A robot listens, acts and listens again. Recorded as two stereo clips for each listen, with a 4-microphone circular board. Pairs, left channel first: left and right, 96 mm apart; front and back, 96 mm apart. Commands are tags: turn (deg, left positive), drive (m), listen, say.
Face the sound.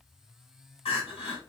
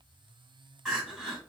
<turn deg="95"/>
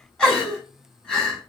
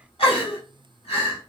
<say>Found it: crying, straight ahead, 1 to 2 m away.</say>